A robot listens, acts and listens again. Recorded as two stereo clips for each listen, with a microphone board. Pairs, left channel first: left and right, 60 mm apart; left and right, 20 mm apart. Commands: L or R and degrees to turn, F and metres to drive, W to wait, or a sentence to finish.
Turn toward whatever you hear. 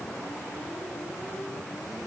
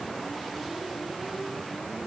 W
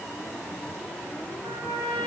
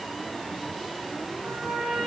R70
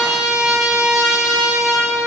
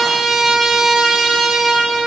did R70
R15
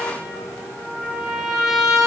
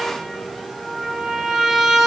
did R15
Found it: a trumpet, straight ahead.